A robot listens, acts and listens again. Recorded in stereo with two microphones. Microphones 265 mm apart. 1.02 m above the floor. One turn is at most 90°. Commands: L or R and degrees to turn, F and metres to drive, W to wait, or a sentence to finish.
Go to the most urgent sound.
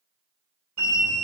R90
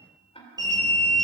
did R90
R15
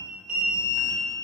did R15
F1.0
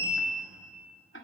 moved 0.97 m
R10
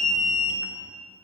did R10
F1.0
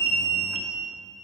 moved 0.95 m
F1.0
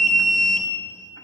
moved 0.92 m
F1.0
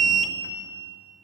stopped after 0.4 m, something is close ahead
Arrived at the alarm, straight ahead.